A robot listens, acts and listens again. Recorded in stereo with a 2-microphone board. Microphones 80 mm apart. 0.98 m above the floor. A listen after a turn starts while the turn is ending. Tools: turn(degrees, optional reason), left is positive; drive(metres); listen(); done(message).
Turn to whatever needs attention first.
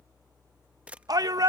turn(degrees=-55, reason="The shout: about 55° right or 125° right.")
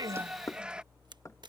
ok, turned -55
turn(degrees=-15, reason="So it is at 15° right.")
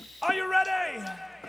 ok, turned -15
done("Found it: a shout, straight ahead.")